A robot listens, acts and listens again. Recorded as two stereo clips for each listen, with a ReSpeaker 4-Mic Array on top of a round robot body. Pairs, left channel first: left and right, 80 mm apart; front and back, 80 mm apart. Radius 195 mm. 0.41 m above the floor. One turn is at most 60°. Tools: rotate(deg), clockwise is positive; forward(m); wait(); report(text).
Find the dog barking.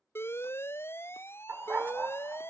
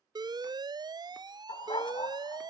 rotate(20)
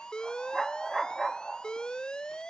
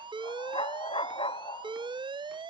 report("Facing the dog barking.")